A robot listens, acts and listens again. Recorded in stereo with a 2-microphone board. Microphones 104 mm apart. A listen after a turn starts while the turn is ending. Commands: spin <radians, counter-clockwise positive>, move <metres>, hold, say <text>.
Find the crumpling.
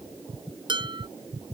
hold
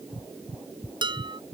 hold
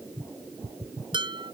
say I can't make out crumpling, only dishes clattering.